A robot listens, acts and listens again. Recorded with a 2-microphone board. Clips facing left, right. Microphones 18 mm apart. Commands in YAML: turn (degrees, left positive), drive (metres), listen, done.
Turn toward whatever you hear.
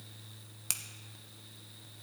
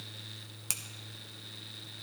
listen: true
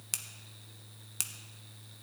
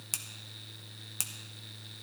turn: 30
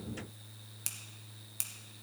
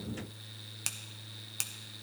listen: true
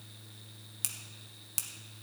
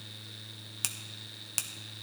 turn: -25
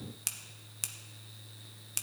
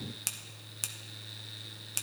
done: "Found it: a finger snap, straight ahead."